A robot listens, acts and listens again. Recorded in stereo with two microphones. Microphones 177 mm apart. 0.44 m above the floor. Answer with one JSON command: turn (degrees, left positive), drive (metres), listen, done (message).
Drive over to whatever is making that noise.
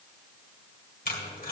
{"turn": 55}
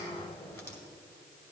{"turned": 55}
{"turn": 15}
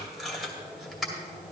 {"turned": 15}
{"drive": 1.0}
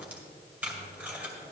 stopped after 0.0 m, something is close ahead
{"turn": -10}
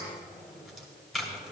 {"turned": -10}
{"done": "Something is in my way. I am facing the tape being pulled but have not reached it."}